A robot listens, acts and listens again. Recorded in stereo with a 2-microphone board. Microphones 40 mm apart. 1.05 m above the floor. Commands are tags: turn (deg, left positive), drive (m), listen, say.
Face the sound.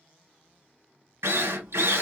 <turn deg="-90"/>
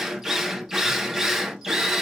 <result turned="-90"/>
<turn deg="-15"/>
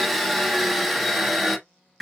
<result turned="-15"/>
<say>Found it: a drill, straight ahead, 1 to 2 m away.</say>